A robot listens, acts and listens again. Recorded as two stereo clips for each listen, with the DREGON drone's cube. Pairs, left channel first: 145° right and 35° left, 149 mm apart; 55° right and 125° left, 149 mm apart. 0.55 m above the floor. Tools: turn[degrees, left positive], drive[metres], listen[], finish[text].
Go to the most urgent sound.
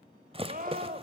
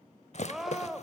Thought: The scream: 35° left.
Action: turn[35]
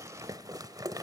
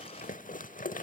Action: listen[]
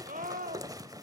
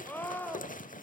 Thought: The scream is now 20° left.
Action: turn[20]
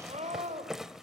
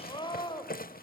Action: drive[1.0]
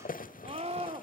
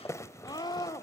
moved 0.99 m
Action: drive[1.0]
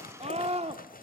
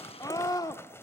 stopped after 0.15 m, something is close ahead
Action: finish[Arrived at the scream, straight ahead.]